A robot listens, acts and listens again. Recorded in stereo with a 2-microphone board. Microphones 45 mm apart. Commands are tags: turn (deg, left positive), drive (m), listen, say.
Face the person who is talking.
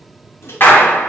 <listen/>
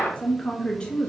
<turn deg="20"/>
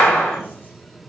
<listen/>
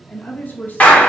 <turn deg="140"/>
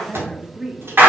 <turn deg="-20"/>
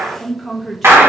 <say>Facing the woman speaking.</say>